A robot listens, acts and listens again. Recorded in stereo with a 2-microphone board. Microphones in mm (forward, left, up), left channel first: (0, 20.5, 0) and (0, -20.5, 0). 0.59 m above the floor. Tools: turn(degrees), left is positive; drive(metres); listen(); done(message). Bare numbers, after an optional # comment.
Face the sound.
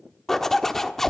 turn(30)
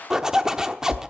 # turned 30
# So it is at 20° right.
turn(-20)
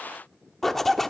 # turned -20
# The zipper is now 10° left.
turn(10)
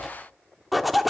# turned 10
done("Facing the zipper.")